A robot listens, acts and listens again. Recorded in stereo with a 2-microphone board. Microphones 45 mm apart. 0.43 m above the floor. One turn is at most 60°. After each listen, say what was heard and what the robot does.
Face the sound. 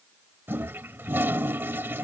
The toilet flushing: about 50° right or 130° right. Turn 50° right.
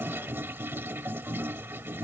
So it is at 70° right. Turn 60° right.
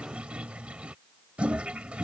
The toilet flushing is now 30° right. Turn 30° right.
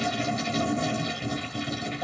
Facing the toilet flushing.